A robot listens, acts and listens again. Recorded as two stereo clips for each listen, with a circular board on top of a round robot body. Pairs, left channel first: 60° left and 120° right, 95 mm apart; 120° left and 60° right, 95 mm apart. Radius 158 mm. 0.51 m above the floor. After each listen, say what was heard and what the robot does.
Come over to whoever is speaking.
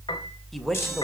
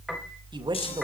The man speaking: 30° right. Turn 30° right.
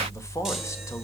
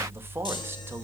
Drive 1.0 m forward.
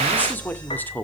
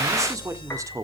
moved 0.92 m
The man speaking is now 10° right. Turn 10° right.
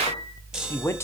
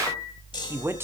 Drive 1.0 m forward.
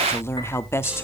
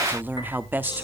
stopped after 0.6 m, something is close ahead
Arrived at the man speaking, straight ahead.